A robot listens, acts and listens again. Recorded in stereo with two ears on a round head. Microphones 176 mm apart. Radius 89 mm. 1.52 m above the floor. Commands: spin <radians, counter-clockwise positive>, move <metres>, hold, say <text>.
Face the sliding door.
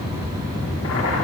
hold
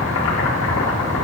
hold
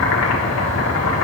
say I can't make out a sliding door to turn to.